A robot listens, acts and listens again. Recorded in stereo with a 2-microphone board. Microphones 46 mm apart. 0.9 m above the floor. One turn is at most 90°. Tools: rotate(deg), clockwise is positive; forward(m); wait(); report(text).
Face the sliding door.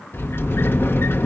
rotate(-60)
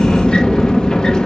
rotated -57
rotate(-20)
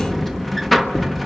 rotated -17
report("Facing the sliding door, 1 to 2 m away.")